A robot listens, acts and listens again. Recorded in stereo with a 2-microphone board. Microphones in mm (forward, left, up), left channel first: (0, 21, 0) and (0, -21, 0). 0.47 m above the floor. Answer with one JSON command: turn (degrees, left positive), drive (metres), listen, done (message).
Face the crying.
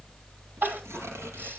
{"turn": -50}
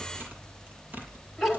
{"done": "Facing the crying."}